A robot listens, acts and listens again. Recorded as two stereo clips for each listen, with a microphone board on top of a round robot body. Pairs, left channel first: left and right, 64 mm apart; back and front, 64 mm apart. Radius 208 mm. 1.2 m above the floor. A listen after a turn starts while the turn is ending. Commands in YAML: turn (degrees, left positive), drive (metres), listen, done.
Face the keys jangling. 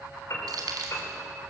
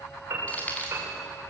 turn: -115
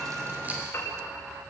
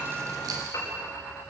listen: true
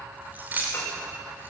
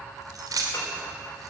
turn: -25
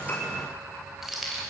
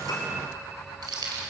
done: "Facing the keys jangling, 2 to 4 m away."